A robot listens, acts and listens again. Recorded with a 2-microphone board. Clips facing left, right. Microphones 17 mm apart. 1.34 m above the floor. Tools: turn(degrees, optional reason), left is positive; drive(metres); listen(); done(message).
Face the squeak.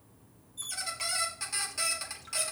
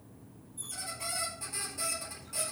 turn(degrees=55, reason="The squeak: about 55° left or 125° left.")
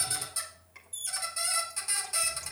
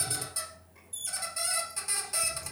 done("Facing the squeak, 2 to 4 m away.")